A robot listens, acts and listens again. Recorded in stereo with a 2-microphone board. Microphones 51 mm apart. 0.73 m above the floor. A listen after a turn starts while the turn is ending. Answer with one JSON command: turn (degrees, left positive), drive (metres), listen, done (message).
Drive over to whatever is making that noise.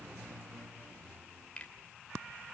{"turn": 25}
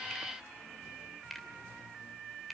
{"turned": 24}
{"drive": 1.0}
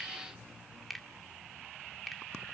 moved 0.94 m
{"drive": 1.0}
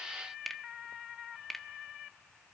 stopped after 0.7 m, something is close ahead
{"done": "Arrived at the finger snap, straight ahead."}